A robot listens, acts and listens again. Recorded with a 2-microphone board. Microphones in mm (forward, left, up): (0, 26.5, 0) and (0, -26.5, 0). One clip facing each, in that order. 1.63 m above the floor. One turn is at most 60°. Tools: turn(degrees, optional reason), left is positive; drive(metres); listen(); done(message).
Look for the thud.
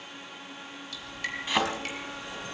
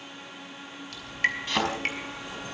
turn(degrees=30)
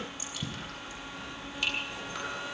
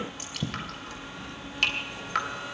listen()
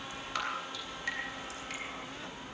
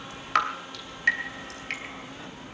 done("I heard a thud, but can't make it out now. It was about 20° right or 140° left.")